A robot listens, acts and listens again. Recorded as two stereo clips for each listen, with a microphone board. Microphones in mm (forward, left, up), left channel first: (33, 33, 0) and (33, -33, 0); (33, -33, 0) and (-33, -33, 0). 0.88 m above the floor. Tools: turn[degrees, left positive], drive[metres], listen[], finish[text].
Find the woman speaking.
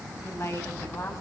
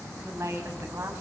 Thought: The woman speaking: 130° left.
Action: turn[130]
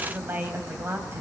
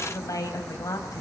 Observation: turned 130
Thought: The woman speaking is now 35° right.
Action: turn[-35]
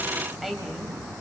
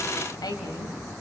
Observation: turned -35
Action: finish[Facing the woman speaking.]